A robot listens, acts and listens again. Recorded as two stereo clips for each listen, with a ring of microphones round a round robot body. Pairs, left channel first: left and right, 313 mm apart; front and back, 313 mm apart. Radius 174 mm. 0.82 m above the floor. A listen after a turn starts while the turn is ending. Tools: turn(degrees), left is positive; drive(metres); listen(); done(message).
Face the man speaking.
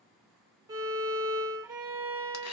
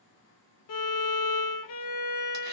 listen()
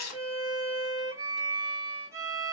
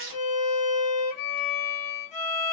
listen()
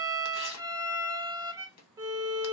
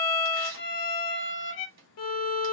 done("I can't make out a man speaking, only a violin and tearing paper.")